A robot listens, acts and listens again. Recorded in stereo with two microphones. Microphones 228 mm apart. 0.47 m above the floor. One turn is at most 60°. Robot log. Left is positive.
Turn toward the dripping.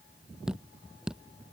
cmd yaw -30
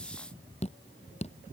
note: So it is at 30° left.
cmd yaw +30
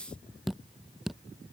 end: Facing the dripping.